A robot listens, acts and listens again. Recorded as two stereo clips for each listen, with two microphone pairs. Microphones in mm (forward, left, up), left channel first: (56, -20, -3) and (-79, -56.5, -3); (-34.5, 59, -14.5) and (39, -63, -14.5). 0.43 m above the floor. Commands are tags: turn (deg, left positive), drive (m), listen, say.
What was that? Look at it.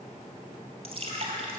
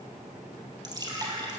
<turn deg="-120"/>
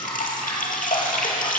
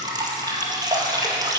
<say>Found it: dripping, straight ahead.</say>